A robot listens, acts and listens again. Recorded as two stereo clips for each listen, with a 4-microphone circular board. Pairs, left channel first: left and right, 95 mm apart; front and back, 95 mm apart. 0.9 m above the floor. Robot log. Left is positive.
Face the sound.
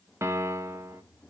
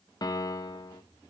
note: The piano: 35° right.
cmd yaw -35
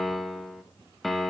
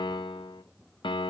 end: Facing the piano, under 1 m away.